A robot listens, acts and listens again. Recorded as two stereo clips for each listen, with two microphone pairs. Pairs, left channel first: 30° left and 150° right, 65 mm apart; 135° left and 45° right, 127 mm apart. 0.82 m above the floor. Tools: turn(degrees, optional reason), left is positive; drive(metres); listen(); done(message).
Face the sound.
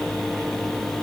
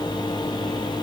listen()
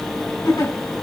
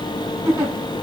turn(degrees=20, reason="The giggle: 20° left.")
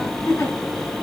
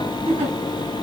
done("Facing the giggle, over 4 m away.")